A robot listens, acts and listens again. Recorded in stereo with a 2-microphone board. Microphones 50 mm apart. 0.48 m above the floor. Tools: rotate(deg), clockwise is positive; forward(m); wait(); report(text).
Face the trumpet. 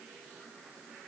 wait()
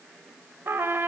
rotate(50)
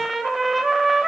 report("Found it: a trumpet, straight ahead.")